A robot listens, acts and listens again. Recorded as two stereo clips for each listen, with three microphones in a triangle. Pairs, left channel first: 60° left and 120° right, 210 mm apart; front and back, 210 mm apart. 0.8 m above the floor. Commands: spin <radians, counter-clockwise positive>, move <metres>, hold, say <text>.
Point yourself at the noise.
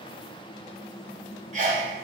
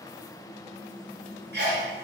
spin -2.88
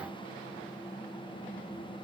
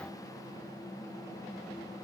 say Facing where the sneeze came from. I can't hear it now.